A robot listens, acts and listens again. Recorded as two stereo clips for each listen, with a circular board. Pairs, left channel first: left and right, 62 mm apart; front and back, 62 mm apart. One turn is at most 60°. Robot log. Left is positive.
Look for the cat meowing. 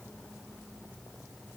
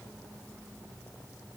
cmd idle
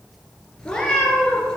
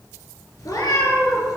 note: The cat meowing: 15° left.
cmd yaw +15
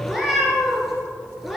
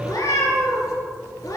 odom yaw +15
end: Facing the cat meowing, 2 to 4 m away.